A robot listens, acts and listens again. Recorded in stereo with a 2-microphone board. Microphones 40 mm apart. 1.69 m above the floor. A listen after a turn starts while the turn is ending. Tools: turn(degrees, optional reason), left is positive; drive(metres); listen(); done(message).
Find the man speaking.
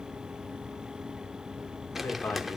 turn(degrees=90)
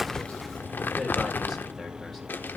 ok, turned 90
listen()
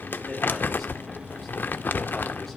listen()
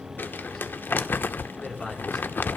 done("Found it: a man speaking, straight ahead.")